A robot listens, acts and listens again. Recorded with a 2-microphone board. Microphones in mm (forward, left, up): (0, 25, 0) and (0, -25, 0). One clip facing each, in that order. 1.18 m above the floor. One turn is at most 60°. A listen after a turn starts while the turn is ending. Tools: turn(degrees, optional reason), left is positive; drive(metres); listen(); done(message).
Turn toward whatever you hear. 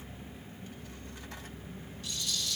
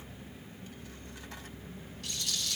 turn(degrees=-60)
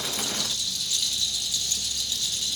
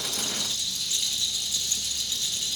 turn(degrees=-30, reason="So it is at 30° right.")
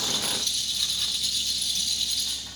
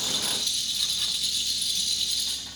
done("Found it: a rattle, straight ahead, 1 to 2 m away.")